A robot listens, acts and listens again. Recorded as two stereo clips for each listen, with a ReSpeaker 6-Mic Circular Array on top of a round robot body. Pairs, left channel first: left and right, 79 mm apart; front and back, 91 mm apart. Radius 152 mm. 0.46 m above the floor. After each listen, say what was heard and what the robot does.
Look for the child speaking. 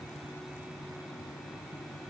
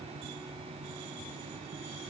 Keep listening.
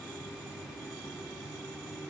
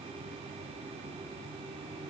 Keep listening.
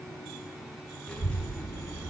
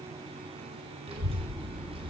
The child speaking: 155° left. Turn 155° left.
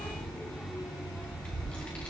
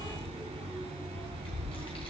The child speaking is now 15° left. Turn 15° left.
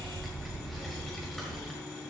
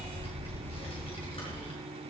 Found it: a child speaking, straight ahead, 1 to 2 m away.